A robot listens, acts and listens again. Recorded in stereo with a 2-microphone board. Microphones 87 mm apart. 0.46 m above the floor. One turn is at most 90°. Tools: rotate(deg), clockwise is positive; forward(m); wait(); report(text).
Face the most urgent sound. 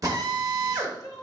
rotate(-50)
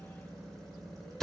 wait()
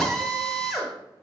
wait()
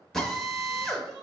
report("I heard crying, but can't make it out now. It was about straight ahead or 80° left.")